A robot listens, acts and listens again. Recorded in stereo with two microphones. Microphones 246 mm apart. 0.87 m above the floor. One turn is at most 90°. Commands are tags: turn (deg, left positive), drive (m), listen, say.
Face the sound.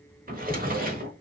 <turn deg="-35"/>
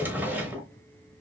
<turn deg="-10"/>
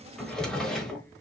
<say>Found it: a drawer, straight ahead, 1 to 2 m away.</say>